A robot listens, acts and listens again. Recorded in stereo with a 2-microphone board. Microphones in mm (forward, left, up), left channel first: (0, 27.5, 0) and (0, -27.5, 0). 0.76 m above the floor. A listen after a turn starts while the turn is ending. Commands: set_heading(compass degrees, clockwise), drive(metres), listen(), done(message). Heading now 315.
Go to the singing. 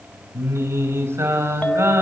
set_heading(10)
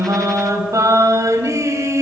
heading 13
set_heading(83)
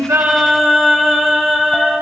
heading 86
drive(1.0)
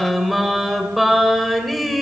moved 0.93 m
drive(1.0)
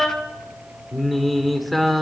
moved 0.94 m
drive(1.0)
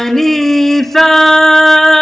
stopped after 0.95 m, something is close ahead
done("I am next to the singing.")